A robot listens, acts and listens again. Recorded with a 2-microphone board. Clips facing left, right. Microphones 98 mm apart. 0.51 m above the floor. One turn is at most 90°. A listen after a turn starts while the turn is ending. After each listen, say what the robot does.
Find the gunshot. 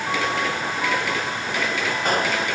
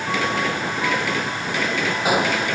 Turn 30° right.
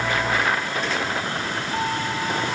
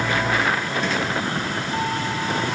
Keep listening.
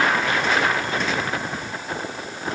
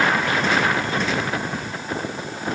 I heard a gunshot, but can't make it out now. It was about 20° left or 140° right.